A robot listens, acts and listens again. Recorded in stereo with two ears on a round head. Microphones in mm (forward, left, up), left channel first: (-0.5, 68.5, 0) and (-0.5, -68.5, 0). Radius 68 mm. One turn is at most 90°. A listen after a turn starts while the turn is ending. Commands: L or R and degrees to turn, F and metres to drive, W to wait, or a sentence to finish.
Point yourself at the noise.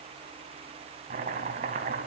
R50
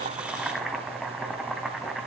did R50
Found it: chopping, straight ahead.